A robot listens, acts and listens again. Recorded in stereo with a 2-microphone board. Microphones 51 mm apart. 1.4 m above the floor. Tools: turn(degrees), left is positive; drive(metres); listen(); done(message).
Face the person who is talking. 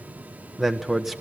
turn(degrees=-30)
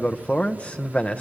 turn(degrees=30)
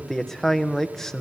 turn(degrees=10)
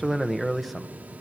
done("Found it: a man speaking, straight ahead.")